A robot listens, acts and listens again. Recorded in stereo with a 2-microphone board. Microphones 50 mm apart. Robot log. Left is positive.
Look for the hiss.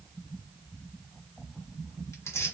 cmd idle
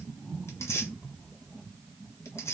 cmd idle
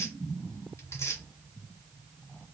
end: I can't make out a hiss, only tearing paper.